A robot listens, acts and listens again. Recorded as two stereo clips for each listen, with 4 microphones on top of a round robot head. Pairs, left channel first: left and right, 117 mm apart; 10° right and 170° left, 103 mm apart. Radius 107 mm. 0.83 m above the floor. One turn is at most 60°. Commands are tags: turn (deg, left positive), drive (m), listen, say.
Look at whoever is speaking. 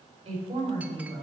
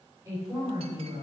<turn deg="-60"/>
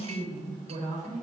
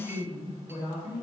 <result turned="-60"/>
<turn deg="-60"/>
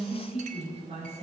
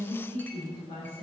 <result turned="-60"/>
<turn deg="-45"/>
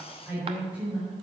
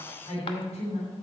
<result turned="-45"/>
<turn deg="-10"/>
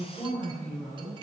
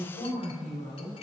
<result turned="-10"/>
<say>Found it: a woman speaking, straight ahead, over 4 m away.</say>